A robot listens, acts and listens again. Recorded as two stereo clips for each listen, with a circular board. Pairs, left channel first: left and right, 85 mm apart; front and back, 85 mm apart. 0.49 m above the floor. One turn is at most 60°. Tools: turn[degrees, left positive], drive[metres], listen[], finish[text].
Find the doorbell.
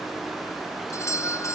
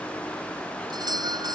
Thought: The doorbell: 145° left.
Action: turn[60]
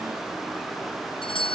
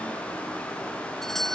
Thought: The doorbell is now 85° left.
Action: turn[60]
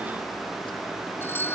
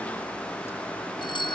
Thought: The doorbell is now 25° left.
Action: turn[25]
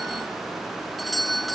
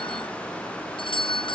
Action: finish[Found it: a doorbell, straight ahead.]